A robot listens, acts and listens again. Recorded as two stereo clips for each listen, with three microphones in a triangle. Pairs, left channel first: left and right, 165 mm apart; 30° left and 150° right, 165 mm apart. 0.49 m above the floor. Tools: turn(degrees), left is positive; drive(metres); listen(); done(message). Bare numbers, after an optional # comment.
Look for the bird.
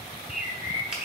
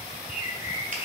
# The bird: 130° left.
turn(130)
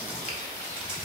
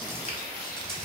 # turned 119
# Nothing new. It was at 15° left.
turn(15)
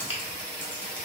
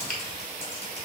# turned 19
listen()
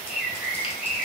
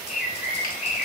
done("Found it: a bird, straight ahead.")